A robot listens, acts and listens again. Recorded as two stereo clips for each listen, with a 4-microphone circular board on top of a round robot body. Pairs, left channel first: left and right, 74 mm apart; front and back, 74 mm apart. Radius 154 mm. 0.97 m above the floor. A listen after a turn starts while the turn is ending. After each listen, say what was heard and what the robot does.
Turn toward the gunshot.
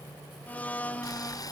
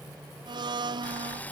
Keep listening.
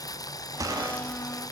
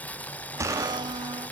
The gunshot: 135° right. Turn 135° right.
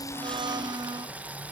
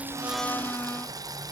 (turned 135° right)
I heard a gunshot from this way, but can't make it out now.